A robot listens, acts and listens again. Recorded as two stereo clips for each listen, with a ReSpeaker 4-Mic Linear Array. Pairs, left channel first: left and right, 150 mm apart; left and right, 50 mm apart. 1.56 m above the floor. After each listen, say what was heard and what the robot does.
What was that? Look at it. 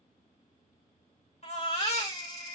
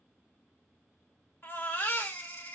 The baby crying: about 40° left or 140° left. Turn 40° left.
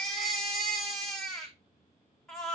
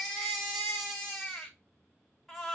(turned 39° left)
Found it: a baby crying, straight ahead.